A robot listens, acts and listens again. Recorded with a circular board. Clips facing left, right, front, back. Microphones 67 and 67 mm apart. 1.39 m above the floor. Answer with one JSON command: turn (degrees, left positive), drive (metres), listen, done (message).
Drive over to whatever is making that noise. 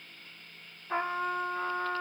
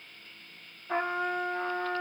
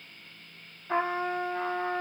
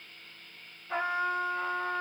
{"turn": -60}
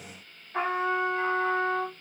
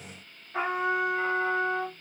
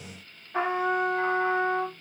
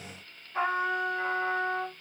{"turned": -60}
{"turn": -10}
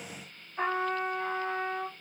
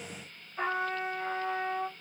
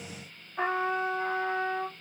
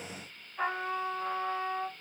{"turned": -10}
{"drive": 1.0}
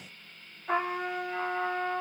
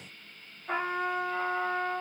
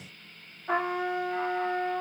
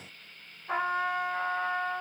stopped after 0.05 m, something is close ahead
{"done": "Something is in my way. I am facing the trumpet but have not reached it."}